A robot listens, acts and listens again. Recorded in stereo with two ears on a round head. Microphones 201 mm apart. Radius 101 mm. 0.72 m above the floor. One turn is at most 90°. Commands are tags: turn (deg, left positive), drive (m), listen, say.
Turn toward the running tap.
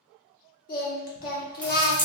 <turn deg="30"/>
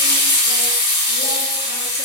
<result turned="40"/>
<turn deg="90"/>
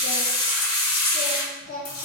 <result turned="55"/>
<turn deg="75"/>
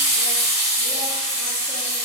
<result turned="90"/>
<turn deg="-15"/>
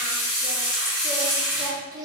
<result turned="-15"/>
<say>Facing the running tap.</say>